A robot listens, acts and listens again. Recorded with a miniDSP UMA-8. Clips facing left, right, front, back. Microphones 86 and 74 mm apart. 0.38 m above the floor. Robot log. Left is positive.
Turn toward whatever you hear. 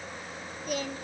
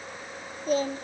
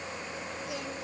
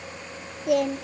note: The singing: 150° right.
cmd yaw -150
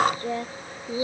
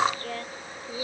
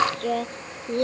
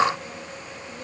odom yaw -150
note: The singing is now 20° left.
cmd yaw +20
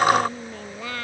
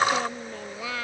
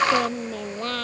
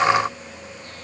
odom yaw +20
end: Found it: singing, straight ahead.